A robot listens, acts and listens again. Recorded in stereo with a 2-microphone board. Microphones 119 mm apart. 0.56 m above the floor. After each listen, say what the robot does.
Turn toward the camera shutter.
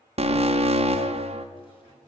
Keep listening.
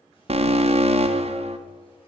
Keep listening.
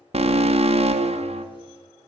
I can't make out a camera shutter to turn to.